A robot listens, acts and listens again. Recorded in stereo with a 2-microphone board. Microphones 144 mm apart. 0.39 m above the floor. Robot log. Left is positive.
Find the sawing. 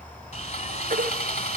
note: The sawing: about 55° left or 125° left.
cmd yaw +55
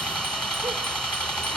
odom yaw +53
end: Facing the sawing.